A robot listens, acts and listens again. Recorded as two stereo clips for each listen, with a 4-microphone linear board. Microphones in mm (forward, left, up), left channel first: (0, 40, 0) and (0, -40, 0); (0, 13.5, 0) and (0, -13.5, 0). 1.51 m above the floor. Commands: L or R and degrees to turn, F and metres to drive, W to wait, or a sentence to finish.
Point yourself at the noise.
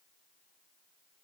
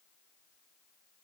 W
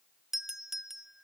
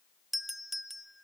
R30
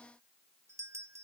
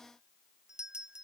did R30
R140
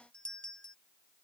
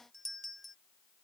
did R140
L10
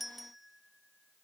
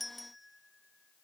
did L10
Facing the doorbell.